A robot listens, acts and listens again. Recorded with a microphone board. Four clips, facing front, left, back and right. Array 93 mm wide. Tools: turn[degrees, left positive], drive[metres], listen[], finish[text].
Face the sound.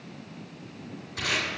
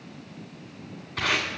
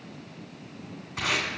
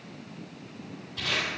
Thought: The tape being pulled: 120° left.
Action: turn[120]
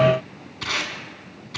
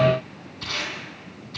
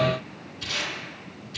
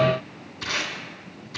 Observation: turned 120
Thought: The tape being pulled is now 10° right.
Action: turn[-10]
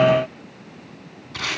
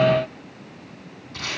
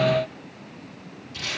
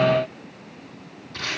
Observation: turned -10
Action: finish[Facing the tape being pulled, 1 to 2 m away.]